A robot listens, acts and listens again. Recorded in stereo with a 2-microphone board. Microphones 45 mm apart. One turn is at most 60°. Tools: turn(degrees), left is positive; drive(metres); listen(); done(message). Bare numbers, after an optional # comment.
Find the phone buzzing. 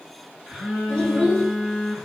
# The phone buzzing: about 15° right or 165° right.
turn(-15)
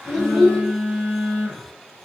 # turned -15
# So it is at 150° right.
turn(-60)
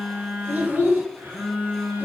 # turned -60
# The phone buzzing is now 95° right.
turn(-60)
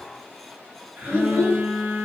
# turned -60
# The phone buzzing is now 45° right.
turn(-45)
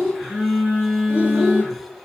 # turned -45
done("Found it: a phone buzzing, straight ahead.")